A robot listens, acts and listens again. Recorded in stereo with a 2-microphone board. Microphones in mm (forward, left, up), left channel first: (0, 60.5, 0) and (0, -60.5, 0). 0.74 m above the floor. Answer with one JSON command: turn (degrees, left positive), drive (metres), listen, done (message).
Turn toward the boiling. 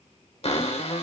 {"listen": true}
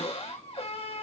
{"listen": true}
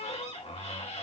{"done": "I can't make out boiling, only a cupboard door."}